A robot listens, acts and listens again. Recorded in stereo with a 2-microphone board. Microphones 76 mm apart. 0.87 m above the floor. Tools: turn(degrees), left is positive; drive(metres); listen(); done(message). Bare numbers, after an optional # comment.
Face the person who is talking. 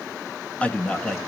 turn(30)
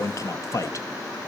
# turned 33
# So it is at 135° left.
turn(135)
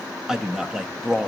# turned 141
# The man speaking is now 10° right.
turn(-10)
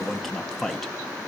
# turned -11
done("Found it: a man speaking, straight ahead, under 1 m away.")